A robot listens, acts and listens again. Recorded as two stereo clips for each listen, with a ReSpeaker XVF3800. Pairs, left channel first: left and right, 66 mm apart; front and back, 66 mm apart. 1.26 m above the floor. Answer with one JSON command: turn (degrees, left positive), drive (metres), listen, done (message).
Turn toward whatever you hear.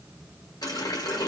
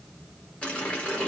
{"turn": 75}
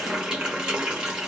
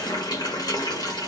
{"turn": -10}
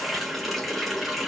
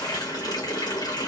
{"done": "Facing the running tap."}